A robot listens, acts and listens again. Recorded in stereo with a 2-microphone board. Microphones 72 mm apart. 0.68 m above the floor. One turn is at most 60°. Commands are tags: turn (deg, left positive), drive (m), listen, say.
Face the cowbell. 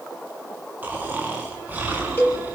<turn deg="25"/>
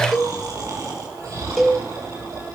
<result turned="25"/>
<say>Facing the cowbell.</say>